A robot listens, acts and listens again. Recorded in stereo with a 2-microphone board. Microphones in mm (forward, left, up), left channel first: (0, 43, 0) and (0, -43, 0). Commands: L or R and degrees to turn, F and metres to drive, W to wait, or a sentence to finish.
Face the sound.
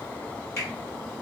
L35
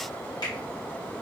W
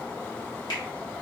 L110
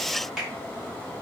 R10
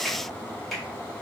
Facing the finger snap, 1 to 2 m away.